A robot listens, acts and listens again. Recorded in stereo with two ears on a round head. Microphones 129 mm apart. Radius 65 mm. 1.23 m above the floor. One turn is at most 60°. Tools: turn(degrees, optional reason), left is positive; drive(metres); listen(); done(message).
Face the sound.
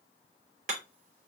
turn(degrees=-60, reason="The hammering: about 60° right or 120° right.")
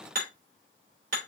turn(degrees=-60, reason="So it is at 60° right.")
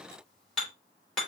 done("Found it: hammering, straight ahead.")